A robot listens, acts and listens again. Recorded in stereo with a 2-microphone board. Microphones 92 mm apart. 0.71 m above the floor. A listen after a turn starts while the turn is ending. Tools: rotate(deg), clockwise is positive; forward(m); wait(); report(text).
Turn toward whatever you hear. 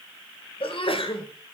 rotate(-90)
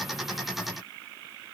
report("I heard a sneeze from this way, but can't make it out now.")